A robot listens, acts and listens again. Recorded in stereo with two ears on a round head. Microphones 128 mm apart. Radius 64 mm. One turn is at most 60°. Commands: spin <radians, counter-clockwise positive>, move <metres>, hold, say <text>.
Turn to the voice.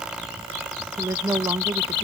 spin -0.35
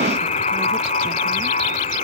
hold
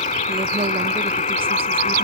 hold
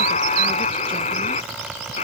say I heard a woman speaking, but can't make it out now. It was about straight ahead or 140° right.